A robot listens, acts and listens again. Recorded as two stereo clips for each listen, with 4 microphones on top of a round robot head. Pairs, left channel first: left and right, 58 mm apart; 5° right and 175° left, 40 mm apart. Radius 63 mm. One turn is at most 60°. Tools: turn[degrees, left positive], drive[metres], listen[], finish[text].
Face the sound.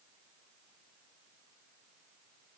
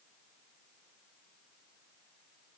Action: listen[]
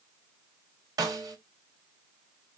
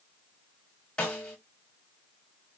Thought: The snare drum: 75° right.
Action: turn[-60]
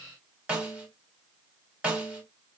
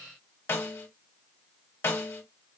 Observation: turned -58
Thought: The snare drum is now 15° right.
Action: turn[-15]
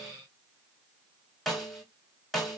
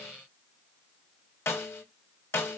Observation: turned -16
Action: finish[Facing the snare drum.]